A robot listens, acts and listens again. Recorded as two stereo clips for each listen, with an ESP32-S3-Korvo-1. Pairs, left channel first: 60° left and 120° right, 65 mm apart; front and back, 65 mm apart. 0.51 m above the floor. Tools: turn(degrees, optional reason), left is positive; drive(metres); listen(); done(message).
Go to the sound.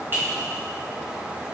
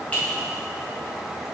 turn(degrees=-70, reason="The clink: 70° right.")
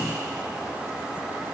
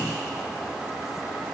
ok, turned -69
listen()
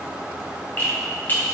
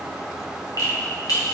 drive(metres=1.0)
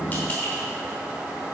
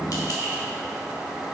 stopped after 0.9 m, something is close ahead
listen()
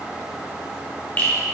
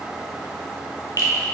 done("I am next to the clink.")